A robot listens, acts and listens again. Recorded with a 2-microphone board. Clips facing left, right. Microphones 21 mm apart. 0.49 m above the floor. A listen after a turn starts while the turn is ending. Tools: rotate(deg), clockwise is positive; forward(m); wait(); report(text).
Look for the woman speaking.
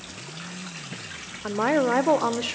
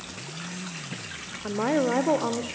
rotate(-50)
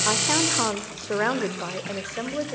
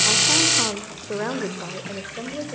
rotate(-55)
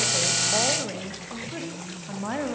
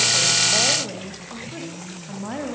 rotate(-20)
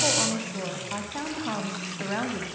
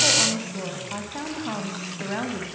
report("Found it: a woman speaking, straight ahead.")